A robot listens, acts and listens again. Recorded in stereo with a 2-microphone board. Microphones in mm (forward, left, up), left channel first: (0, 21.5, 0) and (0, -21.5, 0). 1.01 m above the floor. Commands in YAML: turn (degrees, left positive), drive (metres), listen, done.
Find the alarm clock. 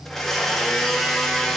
listen: true
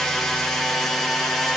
listen: true
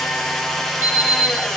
turn: -55
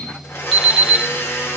done: "Found it: an alarm clock, straight ahead."